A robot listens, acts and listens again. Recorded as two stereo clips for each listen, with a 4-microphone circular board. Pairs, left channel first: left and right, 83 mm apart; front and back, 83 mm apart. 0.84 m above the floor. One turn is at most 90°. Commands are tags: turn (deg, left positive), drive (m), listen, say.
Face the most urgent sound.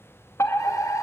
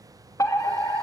<turn deg="40"/>
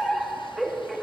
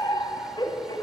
<say>Facing the fire alarm.</say>